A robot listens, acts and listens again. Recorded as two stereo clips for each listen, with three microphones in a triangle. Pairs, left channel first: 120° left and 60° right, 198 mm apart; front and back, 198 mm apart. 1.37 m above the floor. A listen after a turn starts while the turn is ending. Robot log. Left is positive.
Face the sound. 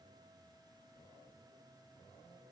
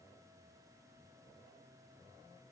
cmd idle
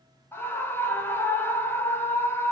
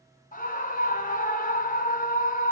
note: The scream: 45° left.
cmd yaw +45
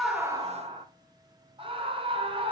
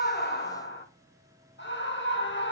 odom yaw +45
end: Facing the scream, 2 to 4 m away.